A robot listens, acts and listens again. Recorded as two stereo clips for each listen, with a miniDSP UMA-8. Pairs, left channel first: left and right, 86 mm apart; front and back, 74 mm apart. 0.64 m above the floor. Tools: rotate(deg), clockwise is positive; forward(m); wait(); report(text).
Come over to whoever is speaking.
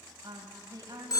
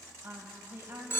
rotate(130)
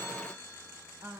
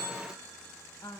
rotate(35)
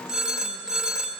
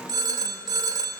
wait()
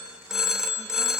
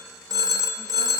wait()
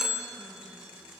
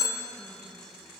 report("I heard a woman speaking from this way, but can't make it out now. I did not reach it.")